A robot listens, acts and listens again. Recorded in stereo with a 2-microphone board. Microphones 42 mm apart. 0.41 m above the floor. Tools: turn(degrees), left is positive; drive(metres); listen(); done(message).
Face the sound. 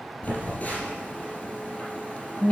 turn(degrees=35)
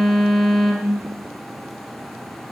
done("Facing the phone buzzing.")